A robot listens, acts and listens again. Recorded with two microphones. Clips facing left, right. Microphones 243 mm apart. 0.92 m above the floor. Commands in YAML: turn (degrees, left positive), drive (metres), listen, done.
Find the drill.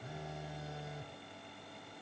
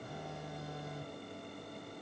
listen: true
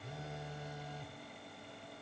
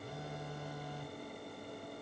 listen: true
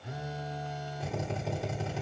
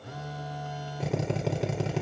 turn: -90
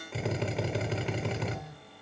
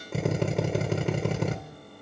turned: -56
turn: -50
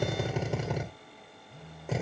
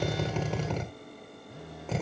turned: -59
turn: 10
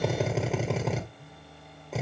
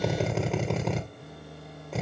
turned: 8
done: "Facing the drill."